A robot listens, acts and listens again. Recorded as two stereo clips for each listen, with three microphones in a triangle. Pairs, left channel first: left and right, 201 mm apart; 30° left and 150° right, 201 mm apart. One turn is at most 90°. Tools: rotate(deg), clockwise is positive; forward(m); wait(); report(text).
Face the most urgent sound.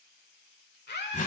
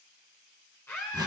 rotate(-90)
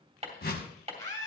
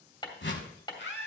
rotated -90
rotate(-20)
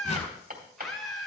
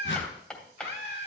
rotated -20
report("Facing the scream, 1 to 2 m away.")